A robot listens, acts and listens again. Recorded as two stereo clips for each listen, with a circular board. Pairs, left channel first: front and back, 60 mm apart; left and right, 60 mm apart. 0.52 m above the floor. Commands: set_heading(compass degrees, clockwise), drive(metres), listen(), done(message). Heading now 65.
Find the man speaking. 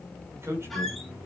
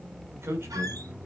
set_heading(200)
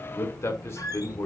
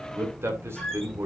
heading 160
set_heading(200)
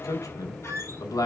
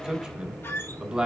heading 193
set_heading(203)
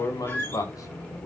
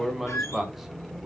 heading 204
done("Found it: a man speaking, straight ahead.")